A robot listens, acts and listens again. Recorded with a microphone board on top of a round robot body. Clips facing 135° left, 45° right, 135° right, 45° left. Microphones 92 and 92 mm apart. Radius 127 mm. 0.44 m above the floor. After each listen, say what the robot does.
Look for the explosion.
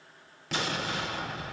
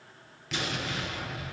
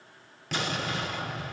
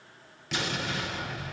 Turn 175° right.
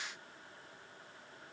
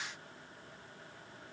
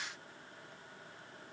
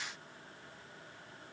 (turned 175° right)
I heard an explosion from this way, but can't make it out now.